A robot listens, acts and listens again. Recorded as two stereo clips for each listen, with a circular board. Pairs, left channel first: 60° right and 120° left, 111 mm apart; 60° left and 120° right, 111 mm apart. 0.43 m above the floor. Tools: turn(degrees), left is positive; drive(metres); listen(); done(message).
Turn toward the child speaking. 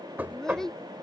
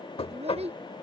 turn(degrees=-145)
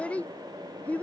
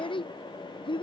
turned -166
turn(degrees=15)
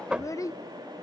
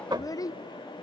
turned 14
done("Found it: a child speaking, straight ahead.")